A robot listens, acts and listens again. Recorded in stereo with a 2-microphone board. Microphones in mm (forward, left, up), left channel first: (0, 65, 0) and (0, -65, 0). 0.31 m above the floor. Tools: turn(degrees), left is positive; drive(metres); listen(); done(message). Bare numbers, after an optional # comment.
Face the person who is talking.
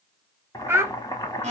# The child speaking: about 20° right or 160° right.
turn(-20)
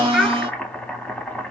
done("Found it: a child speaking, straight ahead, under 1 m away.")